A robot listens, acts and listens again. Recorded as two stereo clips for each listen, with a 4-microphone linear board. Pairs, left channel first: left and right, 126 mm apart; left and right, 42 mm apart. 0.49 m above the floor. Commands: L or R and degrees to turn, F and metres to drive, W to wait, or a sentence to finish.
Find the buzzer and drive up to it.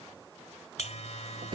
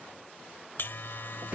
L60
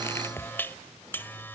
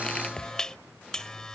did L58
L20
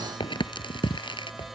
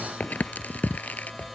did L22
F1.0
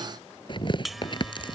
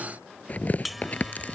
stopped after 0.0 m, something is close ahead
Something is in my way. I am facing the buzzer but have not reached it.